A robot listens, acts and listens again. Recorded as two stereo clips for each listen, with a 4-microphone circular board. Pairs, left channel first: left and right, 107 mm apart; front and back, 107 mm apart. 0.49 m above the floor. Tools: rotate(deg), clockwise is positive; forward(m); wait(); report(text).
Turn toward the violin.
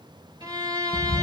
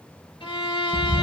rotate(40)
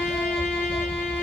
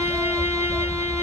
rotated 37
wait()
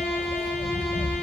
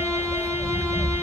wait()
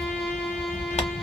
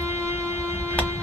report("Facing where the violin came from. I can't hear it now.")